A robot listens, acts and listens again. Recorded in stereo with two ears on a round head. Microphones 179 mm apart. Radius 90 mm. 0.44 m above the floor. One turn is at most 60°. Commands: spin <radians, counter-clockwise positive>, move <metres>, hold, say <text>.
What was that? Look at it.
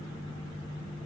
hold
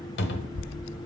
spin 1.05
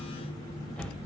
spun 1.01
say Facing the cupboard door, under 1 m away.